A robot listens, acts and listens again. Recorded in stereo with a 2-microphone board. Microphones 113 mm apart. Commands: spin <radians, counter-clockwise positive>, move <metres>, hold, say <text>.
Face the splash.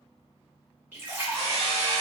spin -0.35
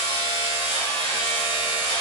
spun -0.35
hold
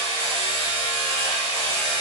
say I heard a splash, but can't make it out now. It was about straight ahead or 140° right.